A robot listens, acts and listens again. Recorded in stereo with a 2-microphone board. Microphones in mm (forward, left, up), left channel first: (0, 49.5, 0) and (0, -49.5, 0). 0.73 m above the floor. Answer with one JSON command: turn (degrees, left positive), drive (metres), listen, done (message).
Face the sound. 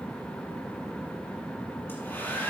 {"turn": 20}
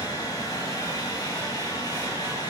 {"turn": 140}
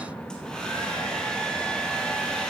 {"turn": 10}
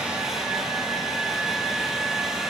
{"done": "Facing the hair dryer."}